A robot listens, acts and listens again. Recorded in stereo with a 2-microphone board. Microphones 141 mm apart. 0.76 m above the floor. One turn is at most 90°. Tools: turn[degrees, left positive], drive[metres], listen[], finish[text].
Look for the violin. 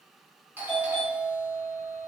Action: listen[]
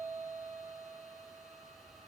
Action: listen[]
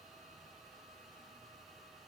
Action: finish[I can't make out a violin to turn to.]